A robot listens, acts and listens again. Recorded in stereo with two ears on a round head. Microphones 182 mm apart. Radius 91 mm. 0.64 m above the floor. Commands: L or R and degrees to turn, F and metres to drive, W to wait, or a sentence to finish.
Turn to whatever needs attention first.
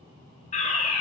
L35
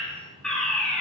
Facing the fire alarm, over 4 m away.